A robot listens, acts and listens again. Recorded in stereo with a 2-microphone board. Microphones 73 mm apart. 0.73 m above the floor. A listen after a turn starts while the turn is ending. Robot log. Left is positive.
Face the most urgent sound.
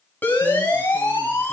note: The siren: about 25° left or 155° left.
cmd yaw +25
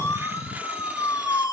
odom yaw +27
note: So it is at 130° left.
cmd yaw +130
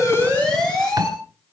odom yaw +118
note: The siren is now 15° left.
cmd yaw +15
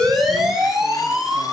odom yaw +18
end: Found it: a siren, straight ahead.